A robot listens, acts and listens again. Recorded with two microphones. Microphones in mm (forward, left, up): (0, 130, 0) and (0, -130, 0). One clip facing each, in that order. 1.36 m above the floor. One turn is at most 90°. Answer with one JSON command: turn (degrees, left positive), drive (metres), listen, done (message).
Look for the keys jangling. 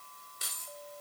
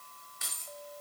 {"turn": 40}
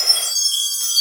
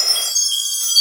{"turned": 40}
{"listen": true}
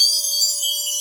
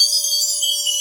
{"listen": true}
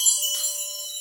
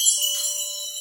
{"done": "I heard keys jangling, but can't make it out now. It was about straight ahead or 100° left."}